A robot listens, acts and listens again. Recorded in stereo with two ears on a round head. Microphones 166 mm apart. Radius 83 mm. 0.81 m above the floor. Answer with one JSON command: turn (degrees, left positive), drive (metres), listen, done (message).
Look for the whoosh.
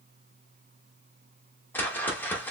{"turn": 30}
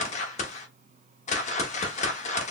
{"turn": 140}
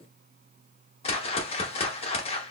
{"turn": 35}
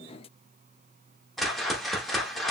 {"done": "Found it: a whoosh, straight ahead, under 1 m away."}